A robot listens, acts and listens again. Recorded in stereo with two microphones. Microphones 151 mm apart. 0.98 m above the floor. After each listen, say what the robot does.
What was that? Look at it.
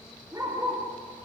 Turn 30° right.
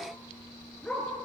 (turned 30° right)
Facing the dog barking.